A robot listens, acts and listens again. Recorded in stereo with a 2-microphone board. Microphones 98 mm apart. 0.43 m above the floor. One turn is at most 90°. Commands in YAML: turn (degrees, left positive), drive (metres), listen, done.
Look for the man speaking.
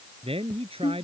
turn: -90
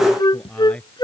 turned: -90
turn: 10
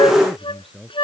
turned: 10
done: "Facing the man speaking."